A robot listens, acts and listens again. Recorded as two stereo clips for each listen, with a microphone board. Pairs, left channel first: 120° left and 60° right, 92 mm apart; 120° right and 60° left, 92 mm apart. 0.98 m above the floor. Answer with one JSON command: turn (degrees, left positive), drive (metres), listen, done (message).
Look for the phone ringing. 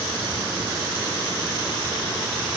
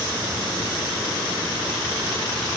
{"listen": true}
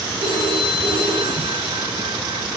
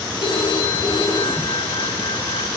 {"turn": -90}
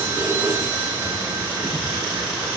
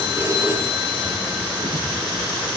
{"done": "Found it: a phone ringing, straight ahead, over 4 m away."}